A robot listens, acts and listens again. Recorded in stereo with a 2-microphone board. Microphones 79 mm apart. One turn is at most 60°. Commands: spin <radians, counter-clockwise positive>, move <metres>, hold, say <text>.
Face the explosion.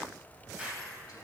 spin -0.35
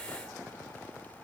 hold
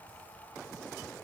say I heard an explosion, but can't make it out now. It was about straight ahead or 140° right.